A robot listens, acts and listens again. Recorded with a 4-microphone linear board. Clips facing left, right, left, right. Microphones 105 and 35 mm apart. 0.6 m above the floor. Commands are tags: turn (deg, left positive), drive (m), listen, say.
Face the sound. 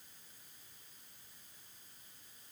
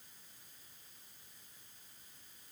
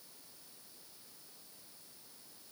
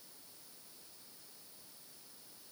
<listen/>
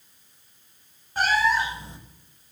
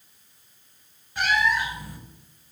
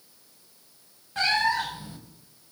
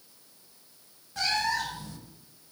<turn deg="30"/>
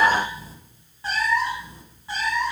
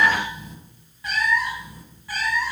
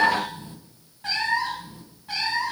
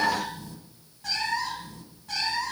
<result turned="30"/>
<turn deg="20"/>
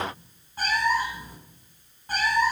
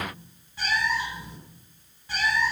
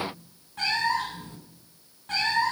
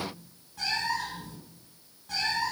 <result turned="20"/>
<turn deg="45"/>
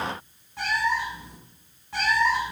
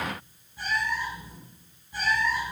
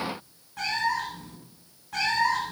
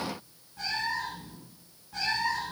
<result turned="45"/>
<turn deg="90"/>
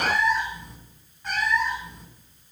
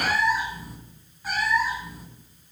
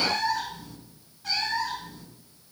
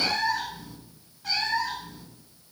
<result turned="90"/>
<say>Found it: a cat meowing, straight ahead.</say>